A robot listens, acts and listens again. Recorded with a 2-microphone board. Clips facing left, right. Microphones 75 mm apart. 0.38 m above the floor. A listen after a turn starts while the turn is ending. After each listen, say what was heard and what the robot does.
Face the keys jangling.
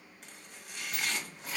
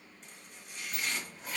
Turn 30° left.
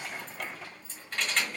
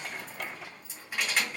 Turn 30° right.
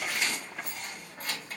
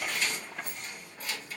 So it is at 45° left. Turn 45° left.
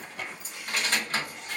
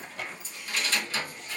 The keys jangling is now 55° left. Turn 55° left.
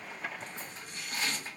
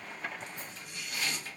The keys jangling is now 25° left. Turn 25° left.
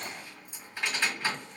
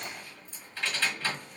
The keys jangling is now 10° left. Turn 10° left.
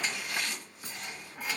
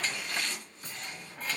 Found it: keys jangling, straight ahead, 1 to 2 m away.